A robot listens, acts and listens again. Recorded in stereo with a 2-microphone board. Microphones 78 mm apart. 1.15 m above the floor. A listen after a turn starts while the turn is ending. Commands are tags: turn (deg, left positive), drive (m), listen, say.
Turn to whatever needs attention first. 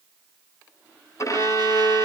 <listen/>
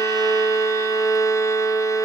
<listen/>
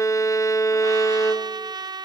<say>I can't make out anything urgent, only a violin and a trumpet.</say>